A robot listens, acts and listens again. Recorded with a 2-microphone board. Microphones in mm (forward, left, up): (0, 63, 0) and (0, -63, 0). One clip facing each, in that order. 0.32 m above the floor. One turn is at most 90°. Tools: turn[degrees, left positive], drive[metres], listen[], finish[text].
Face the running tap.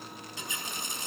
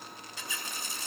Thought: The running tap: about 20° left or 160° left.
Action: turn[20]
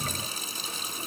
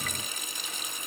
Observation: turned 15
Thought: So it is at 145° left.
Action: turn[90]
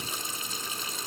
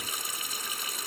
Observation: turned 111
Thought: The running tap is now 30° left.
Action: turn[30]
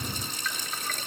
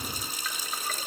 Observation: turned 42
Thought: The running tap is now 10° right.
Action: turn[-10]
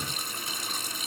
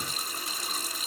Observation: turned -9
Action: finish[Facing the running tap, 1 to 2 m away.]